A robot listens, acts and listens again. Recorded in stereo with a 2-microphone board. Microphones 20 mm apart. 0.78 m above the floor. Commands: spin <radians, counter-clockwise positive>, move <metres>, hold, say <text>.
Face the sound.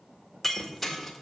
spin 0.52
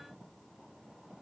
hold
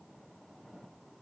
say I heard breaking glass, but can't make it out now. It was about 25° right or 145° left.